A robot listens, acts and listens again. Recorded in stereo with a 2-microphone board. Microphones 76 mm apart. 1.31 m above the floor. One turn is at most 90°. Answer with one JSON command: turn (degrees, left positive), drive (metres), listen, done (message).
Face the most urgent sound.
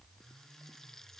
{"listen": true}
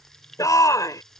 {"turn": 50}
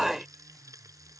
{"done": "Facing the shout."}